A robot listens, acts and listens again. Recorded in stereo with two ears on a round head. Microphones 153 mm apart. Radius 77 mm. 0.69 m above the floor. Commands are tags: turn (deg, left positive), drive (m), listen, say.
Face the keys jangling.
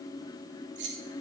<turn deg="-90"/>
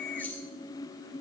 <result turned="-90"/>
<turn deg="10"/>
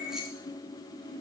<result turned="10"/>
<listen/>
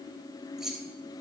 <say>Facing the keys jangling.</say>